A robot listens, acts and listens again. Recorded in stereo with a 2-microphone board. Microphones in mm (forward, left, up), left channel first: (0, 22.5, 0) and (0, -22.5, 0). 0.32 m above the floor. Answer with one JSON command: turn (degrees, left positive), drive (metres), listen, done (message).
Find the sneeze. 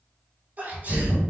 {"turn": -35}
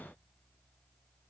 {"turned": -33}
{"listen": true}
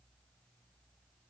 {"done": "I heard a sneeze, but can't make it out now. It was about 5° right or 110° right."}